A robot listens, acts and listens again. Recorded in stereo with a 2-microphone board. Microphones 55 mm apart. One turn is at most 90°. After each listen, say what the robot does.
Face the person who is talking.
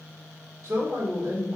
Turn 70° right.
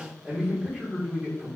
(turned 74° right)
Turn 25° right.
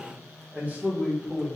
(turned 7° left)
Turn 30° right.
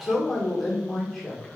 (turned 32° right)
Facing the man speaking, 1 to 2 m away.